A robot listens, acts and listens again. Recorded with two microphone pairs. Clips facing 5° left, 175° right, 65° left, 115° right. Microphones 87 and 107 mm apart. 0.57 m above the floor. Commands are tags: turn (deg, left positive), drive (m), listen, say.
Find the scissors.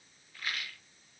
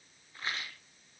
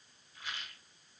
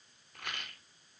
<listen/>
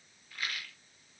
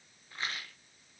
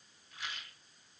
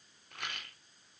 <listen/>
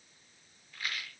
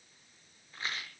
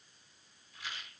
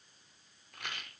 <say>I can't make out scissors to turn to.</say>